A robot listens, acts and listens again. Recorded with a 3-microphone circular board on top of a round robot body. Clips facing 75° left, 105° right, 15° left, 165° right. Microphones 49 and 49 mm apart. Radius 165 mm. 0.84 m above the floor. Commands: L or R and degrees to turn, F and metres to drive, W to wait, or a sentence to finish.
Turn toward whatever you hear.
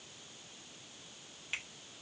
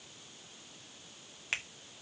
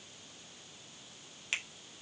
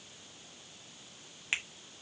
R100
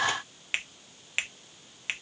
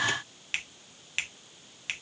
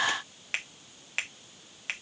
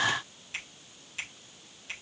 Found it: a finger snap, straight ahead.